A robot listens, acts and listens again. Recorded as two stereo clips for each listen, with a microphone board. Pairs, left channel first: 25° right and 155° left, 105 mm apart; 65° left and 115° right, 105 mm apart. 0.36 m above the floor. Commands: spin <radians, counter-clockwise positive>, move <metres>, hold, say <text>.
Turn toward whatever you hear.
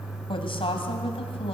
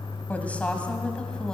spin -0.26
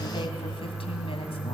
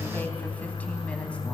spin -0.17
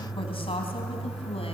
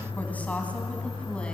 spin -0.17
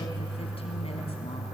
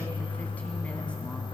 hold
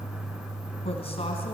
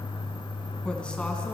hold
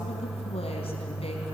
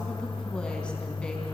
say I heard a woman speaking from this way, but can't make it out now.